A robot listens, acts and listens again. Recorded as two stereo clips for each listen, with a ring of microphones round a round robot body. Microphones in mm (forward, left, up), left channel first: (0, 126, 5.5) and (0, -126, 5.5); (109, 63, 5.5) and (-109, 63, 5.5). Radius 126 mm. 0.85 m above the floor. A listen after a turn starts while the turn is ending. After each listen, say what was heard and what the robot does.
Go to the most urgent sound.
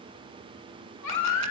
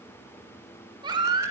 The baby crying: 110° left. Turn 110° left.
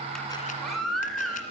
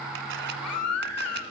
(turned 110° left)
Drive 1.0 m forward.
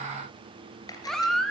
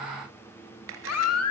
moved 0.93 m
Drive 1.0 m forward.
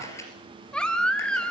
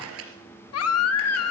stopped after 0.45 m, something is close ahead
I am next to the baby crying.